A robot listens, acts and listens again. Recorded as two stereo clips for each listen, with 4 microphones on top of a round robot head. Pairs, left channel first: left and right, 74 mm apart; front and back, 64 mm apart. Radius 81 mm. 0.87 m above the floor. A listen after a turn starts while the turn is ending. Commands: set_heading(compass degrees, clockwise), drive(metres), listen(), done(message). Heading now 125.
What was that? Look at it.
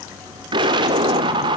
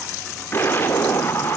set_heading(190)
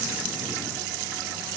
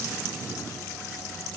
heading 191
done("Facing where the explosion came from. I can't hear it now.")